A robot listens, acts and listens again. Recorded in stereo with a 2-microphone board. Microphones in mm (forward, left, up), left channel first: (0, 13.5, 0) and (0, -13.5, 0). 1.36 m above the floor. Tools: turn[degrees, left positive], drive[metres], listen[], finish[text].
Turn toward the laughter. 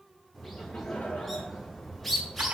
Action: turn[90]
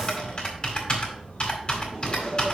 Thought: So it is at 35° right.
Action: turn[-35]
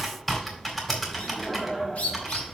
Thought: The laughter is now 10° right.
Action: turn[-10]
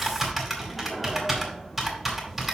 Action: listen[]
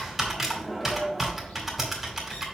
Action: finish[Found it: laughter, straight ahead, 2 to 4 m away.]